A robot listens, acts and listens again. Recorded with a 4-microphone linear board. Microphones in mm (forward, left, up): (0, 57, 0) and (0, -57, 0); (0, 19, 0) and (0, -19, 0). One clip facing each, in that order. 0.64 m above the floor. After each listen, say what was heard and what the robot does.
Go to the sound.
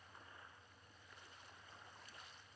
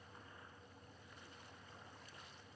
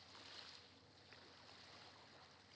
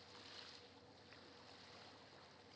Keep listening.
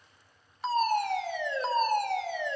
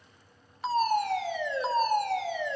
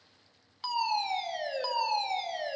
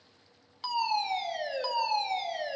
Turn 30° left.
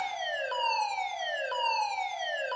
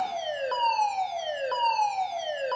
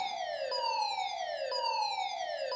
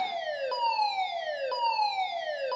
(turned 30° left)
So it is at 30° right. Turn 30° right.
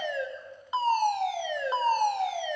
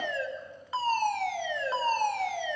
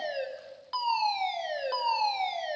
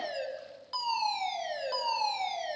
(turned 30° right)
The fire alarm is now 20° left. Turn 20° left.
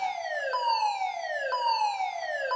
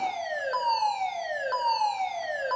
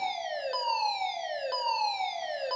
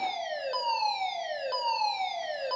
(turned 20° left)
Drive 1.0 m forward.
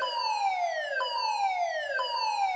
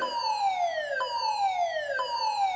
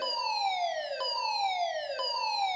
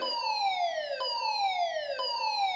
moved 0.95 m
Drive 1.0 m forward.
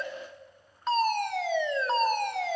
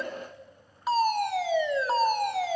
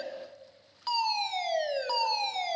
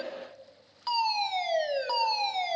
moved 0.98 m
The fire alarm is now 10° right. Turn 10° right.
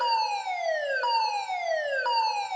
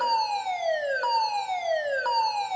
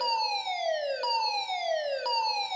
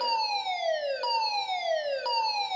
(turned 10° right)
Drive 1.0 m forward.
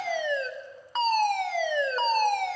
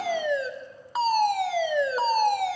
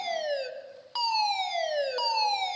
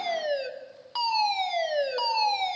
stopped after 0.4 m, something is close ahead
The fire alarm is now 15° right. Turn 15° right.
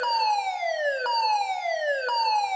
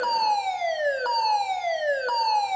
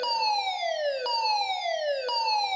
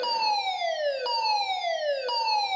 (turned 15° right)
I am next to the fire alarm.